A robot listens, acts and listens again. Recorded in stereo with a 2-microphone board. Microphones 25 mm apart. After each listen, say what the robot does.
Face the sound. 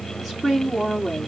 Turn 30° right.
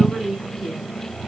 Turn 135° right.
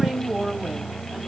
Turn 20° right.
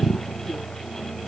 Keep listening.
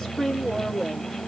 Turn 10° left.
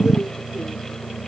Keep listening.
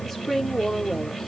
Found it: a woman speaking, straight ahead.